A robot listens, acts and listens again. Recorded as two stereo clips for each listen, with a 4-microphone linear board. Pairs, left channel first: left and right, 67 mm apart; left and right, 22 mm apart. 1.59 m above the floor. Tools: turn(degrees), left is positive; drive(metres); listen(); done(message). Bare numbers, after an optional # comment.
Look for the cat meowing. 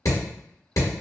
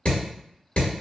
listen()
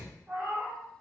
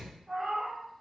# The cat meowing: about 25° right or 155° right.
turn(-25)
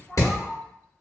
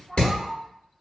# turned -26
done("Found it: a cat meowing, straight ahead.")